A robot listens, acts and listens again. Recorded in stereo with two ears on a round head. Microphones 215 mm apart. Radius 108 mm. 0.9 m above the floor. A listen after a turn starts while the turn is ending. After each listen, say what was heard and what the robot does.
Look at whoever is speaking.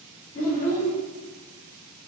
The child speaking: about 35° left or 145° left. Turn 35° left.
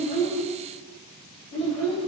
Found it: a child speaking, straight ahead.